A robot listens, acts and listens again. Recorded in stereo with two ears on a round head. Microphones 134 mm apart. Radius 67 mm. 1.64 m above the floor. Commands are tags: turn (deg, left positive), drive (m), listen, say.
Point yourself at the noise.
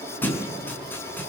<turn deg="30"/>
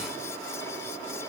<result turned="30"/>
<listen/>
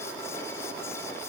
<say>I heard a thud, but can't make it out now. It was about 15° right or 135° left.</say>